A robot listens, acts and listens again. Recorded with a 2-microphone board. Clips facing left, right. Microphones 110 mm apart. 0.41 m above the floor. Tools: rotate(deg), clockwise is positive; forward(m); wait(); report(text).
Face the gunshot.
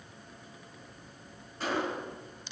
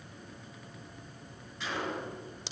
rotate(-40)
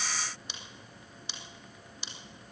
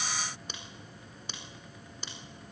wait()
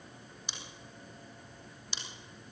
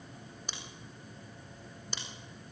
report("I heard a gunshot, but can't make it out now. It was about straight ahead or 100° left.")